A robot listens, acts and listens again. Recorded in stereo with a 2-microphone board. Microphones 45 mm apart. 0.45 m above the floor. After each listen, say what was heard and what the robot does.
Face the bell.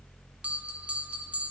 The bell: about 30° right or 150° right. Turn 30° right.
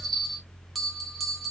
Found it: a bell, straight ahead.